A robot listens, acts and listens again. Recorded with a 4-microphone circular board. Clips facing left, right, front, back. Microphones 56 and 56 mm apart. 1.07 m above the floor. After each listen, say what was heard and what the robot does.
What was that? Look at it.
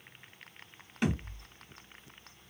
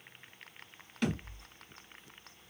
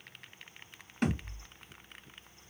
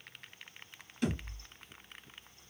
The thud: 20° left. Turn 20° left.
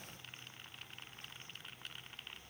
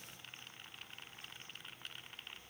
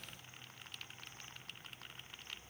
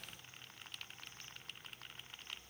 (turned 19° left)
Facing where the thud came from. I can't hear it now.